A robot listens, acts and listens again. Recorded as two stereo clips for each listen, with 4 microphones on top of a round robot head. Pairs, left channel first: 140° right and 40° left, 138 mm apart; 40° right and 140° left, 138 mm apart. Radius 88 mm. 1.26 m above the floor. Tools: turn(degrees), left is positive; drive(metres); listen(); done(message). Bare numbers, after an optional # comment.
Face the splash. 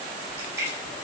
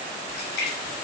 # The splash: 35° right.
turn(-35)
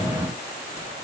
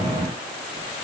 done("Facing where the splash came from. I can't hear it now.")